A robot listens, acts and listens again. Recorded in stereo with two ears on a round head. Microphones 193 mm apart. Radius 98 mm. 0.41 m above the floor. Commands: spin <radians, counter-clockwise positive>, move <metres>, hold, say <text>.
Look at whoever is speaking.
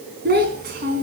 spin -0.87
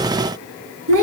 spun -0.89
spin -1.40
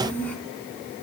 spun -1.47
spin 0.17
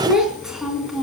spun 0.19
say Facing the child speaking, 2 to 4 m away.